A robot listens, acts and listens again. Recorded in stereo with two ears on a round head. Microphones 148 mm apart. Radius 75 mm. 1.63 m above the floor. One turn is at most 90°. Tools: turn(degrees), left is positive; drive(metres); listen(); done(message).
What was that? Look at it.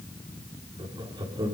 turn(degrees=-30)
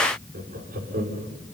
turn(degrees=-90)
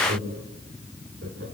turn(degrees=-65)
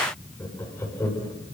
turn(degrees=15)
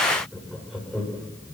done("Found it: laughter, straight ahead.")